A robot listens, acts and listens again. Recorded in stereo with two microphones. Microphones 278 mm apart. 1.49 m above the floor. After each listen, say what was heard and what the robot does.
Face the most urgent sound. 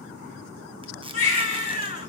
The baby crying: about 50° left or 130° left. Turn 50° left.
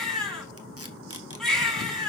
Facing the baby crying, over 4 m away.